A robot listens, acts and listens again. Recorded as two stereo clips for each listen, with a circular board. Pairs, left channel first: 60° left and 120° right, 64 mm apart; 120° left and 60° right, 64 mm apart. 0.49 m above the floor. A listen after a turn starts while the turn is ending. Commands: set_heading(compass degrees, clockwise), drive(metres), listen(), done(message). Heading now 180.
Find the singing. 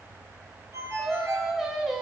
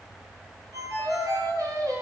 set_heading(215)
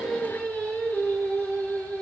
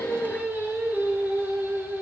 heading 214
done("Found it: singing, straight ahead.")